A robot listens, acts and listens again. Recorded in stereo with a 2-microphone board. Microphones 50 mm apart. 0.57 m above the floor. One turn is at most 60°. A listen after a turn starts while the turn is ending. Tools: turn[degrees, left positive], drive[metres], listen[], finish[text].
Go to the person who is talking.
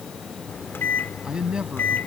Thought: The man speaking: about 20° right or 160° right.
Action: turn[-20]
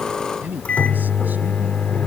Thought: So it is at 140° right.
Action: turn[-60]
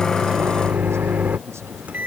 Thought: Nothing new. It was at 80° right.
Action: turn[-60]
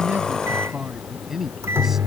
Action: drive[1.0]
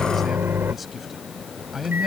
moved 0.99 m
Action: drive[1.0]
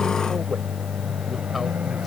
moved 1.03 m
Action: listen[]
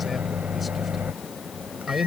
Action: drive[1.0]
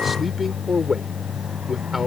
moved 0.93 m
Action: drive[1.0]
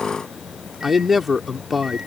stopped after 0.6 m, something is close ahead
Action: finish[Arrived at the man speaking, straight ahead.]